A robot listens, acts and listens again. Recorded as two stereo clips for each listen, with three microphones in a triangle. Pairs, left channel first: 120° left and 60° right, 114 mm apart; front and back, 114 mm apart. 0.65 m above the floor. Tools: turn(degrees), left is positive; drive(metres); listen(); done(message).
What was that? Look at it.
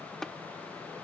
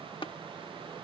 turn(degrees=35)
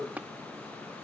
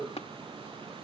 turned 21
turn(degrees=15)
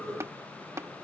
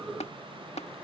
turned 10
done("Facing the tapping.")